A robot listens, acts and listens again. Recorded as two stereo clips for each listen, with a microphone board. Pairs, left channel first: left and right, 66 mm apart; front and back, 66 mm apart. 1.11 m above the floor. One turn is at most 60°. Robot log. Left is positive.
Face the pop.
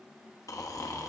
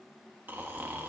cmd idle
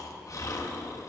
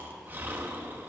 cmd idle
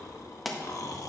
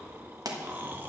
note: The pop: straight behind.
cmd yaw +60
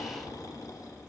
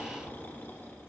note: Nothing new. It was at 120° left.
cmd yaw +60
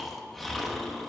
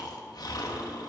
note: Nothing new. It was at 60° left.
cmd yaw +60
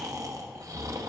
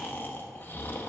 end: Facing where the pop came from. I can't hear it now.